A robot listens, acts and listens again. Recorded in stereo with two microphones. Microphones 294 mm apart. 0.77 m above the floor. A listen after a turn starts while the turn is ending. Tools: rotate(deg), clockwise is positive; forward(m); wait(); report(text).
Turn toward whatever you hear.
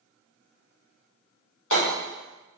rotate(-90)
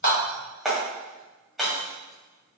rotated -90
report("Facing the hammering.")